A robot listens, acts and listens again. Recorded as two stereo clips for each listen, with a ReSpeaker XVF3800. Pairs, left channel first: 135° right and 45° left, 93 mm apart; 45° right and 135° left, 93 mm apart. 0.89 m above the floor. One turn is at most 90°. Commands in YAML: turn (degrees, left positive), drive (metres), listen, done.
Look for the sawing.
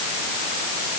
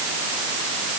listen: true
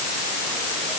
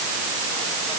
listen: true
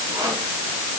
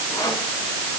done: "I can't make out sawing."